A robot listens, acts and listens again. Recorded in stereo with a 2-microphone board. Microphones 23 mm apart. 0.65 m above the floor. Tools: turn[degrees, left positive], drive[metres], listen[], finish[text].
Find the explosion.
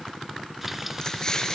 Thought: The explosion: about 30° left or 150° left.
Action: turn[30]
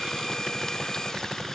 Action: listen[]
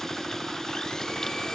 Action: finish[I heard an explosion, but can't make it out now. It was about straight ahead or 120° left.]